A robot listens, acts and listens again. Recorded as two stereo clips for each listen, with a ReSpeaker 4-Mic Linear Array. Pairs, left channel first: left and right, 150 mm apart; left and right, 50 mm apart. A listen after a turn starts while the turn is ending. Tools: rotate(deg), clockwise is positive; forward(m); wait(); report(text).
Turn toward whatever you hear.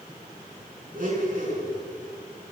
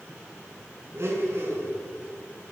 rotate(65)
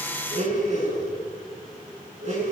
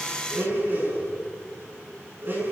rotate(50)
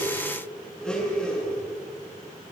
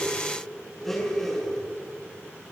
report("Facing the blender.")